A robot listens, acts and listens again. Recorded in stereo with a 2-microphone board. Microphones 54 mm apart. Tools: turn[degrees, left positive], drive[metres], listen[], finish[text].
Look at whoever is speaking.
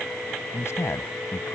Thought: The man speaking: about 55° left or 125° left.
Action: turn[55]
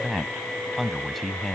Action: finish[Found it: a man speaking, straight ahead.]